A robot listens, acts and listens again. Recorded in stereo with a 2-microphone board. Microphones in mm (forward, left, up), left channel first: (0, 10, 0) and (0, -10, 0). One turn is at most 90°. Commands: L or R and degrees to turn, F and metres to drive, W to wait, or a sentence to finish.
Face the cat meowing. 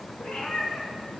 L65
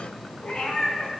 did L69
L35
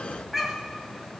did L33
R10
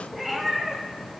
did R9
R20
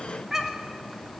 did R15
R25
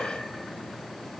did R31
W
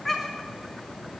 Found it: a cat meowing, straight ahead.